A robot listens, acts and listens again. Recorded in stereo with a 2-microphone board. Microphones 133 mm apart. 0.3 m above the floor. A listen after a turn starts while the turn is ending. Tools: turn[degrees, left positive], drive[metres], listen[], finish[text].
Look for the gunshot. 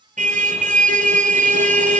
Action: listen[]
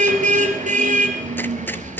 Thought: The gunshot: about 15° left or 165° left.
Action: turn[15]
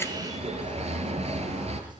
Action: listen[]
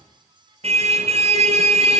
Action: finish[I heard a gunshot, but can't make it out now. It was about straight ahead or 150° left.]